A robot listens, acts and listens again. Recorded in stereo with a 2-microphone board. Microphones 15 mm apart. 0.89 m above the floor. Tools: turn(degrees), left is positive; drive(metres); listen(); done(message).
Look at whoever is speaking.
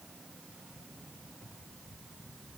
listen()
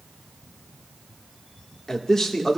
turn(degrees=35)
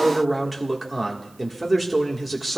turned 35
done("Facing the man speaking.")